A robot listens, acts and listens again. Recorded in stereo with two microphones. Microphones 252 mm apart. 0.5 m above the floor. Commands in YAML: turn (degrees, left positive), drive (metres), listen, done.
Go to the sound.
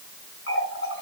turn: 60
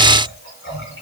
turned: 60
turn: 60
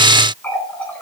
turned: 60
turn: 10
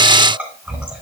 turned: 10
drive: 1.0
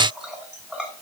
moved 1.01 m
drive: 1.0
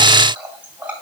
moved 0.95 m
drive: 1.0
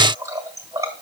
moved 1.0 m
turn: -15
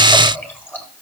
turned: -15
drive: 1.0
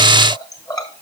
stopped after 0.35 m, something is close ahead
turn: 15
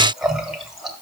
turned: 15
done: "Arrived at the running tap, straight ahead."